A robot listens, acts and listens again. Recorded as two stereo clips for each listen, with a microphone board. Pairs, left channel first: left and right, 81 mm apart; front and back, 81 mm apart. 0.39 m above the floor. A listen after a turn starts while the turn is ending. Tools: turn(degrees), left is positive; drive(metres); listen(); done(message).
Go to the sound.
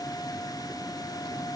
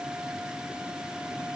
listen()
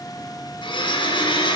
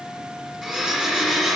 turn(degrees=95)
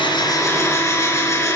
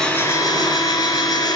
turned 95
turn(degrees=40)
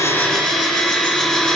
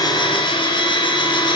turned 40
turn(degrees=10)
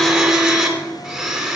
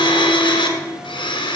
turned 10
drive(metres=1.0)
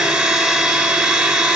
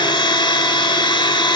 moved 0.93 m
drive(metres=1.0)
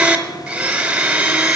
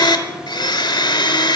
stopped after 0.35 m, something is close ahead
turn(degrees=-15)
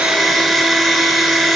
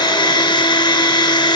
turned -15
done("Arrived at the blender, straight ahead.")